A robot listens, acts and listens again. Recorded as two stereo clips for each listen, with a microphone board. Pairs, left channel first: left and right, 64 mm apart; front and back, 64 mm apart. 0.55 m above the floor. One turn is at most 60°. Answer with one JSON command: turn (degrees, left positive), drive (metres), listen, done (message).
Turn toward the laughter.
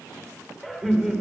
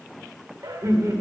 {"turn": -60}
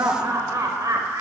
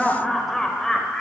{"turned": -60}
{"turn": -60}
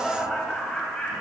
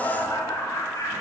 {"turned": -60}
{"turn": 15}
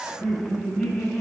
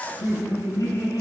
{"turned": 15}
{"done": "Facing the laughter, 2 to 4 m away."}